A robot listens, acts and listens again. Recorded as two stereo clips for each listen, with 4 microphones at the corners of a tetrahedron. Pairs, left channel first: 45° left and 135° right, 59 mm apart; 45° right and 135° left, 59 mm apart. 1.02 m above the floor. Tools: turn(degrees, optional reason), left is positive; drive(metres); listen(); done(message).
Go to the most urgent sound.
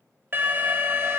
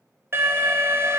turn(degrees=170, reason="The alarm: 170° left.")
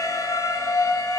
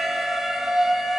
turn(degrees=45, reason="The alarm is now 45° left.")
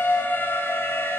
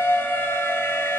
drive(metres=1.0)
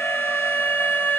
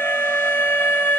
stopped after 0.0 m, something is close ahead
done("Something is in my way. I am facing the alarm but have not reached it.")